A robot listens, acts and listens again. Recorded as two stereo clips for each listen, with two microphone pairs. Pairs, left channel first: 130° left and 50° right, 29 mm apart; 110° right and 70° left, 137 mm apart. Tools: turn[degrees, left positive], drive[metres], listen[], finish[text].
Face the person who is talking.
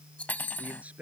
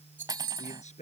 Thought: The man speaking: 80° right.
Action: turn[-80]
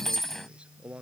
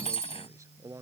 Action: finish[Found it: a man speaking, straight ahead.]